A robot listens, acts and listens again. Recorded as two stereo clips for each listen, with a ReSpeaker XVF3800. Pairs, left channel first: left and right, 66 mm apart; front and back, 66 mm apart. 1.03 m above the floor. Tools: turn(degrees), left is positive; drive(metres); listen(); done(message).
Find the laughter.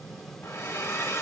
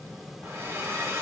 listen()
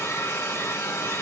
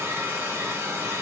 listen()
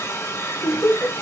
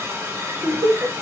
turn(degrees=180)
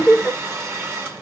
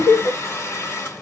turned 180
done("Found it: laughter, straight ahead.")